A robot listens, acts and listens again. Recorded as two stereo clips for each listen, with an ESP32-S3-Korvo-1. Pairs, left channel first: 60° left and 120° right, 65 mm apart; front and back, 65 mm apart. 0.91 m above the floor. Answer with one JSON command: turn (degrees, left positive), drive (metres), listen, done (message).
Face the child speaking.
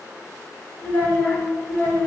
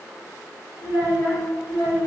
{"done": "Facing the child speaking, 1 to 2 m away."}